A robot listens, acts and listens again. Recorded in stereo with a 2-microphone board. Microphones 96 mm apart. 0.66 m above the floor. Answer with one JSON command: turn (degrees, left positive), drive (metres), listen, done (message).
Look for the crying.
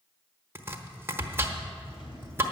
{"listen": true}
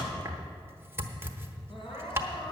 {"turn": 65}
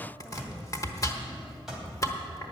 {"listen": true}
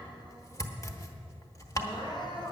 {"turn": 50}
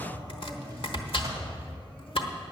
{"listen": true}
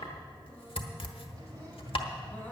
{"listen": true}
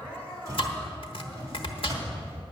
{"turn": 20}
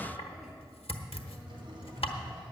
{"listen": true}
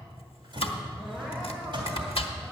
{"listen": true}
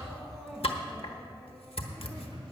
{"done": "Facing the crying."}